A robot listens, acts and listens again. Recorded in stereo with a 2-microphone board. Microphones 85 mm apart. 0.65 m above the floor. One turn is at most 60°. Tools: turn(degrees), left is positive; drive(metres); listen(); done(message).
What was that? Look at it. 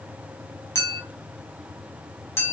turn(degrees=30)
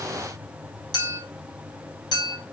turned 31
turn(degrees=60)
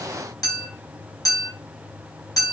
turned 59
turn(degrees=55)
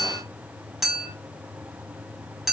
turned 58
done("Facing the clink, under 1 m away.")